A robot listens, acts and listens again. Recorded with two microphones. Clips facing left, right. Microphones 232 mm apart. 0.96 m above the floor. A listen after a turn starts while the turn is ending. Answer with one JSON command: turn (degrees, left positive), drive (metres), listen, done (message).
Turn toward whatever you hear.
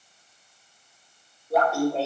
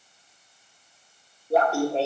{"turn": -30}
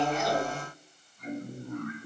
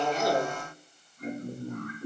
{"turn": -115}
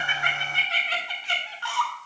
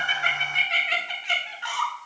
{"turn": -25}
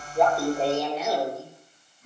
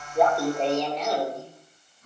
{"turn": 10}
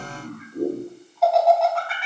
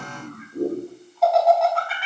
{"done": "Found it: laughter, straight ahead."}